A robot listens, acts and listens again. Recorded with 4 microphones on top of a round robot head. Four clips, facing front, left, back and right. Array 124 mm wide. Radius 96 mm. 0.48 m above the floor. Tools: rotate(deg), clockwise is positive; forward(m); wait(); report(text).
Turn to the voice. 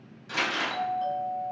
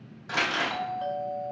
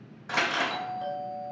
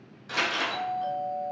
wait()
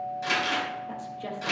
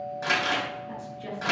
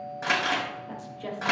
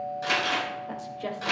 rotate(80)
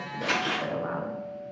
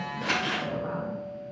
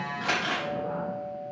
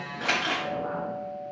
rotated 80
wait()
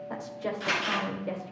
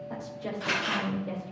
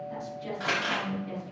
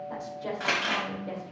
report("Found it: a woman speaking, straight ahead.")